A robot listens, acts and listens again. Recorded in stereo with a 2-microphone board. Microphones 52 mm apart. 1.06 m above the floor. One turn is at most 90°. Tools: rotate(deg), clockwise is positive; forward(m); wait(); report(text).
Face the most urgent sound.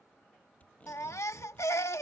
rotate(-65)
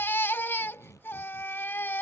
rotate(-45)
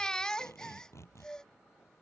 rotate(-15)
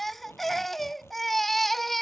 report("Facing the baby crying.")